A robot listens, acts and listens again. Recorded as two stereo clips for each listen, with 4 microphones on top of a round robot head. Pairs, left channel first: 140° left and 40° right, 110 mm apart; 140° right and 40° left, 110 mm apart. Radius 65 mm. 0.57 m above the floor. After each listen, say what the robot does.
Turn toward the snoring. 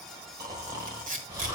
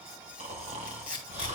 Turn 15° left.
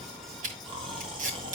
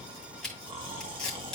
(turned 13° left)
Facing the snoring, 1 to 2 m away.